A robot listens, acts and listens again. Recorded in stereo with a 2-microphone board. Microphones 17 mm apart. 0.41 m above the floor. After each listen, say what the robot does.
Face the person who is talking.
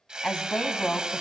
Turn 60° left.
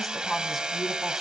Found it: a woman speaking, straight ahead, 2 to 4 m away.